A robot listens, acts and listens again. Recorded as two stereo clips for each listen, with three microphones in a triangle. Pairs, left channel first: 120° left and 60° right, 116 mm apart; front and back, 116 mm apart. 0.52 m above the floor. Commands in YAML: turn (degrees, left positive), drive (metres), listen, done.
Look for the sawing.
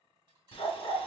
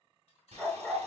turn: 160
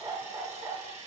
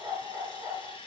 turn: -40
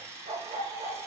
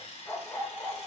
done: "Facing the sawing."